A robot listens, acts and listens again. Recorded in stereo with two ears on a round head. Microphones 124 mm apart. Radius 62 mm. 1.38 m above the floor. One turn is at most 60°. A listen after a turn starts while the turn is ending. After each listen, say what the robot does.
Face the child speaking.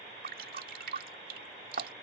Keep listening.
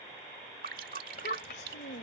Turn 60° left.
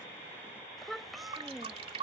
Found it: a child speaking, straight ahead.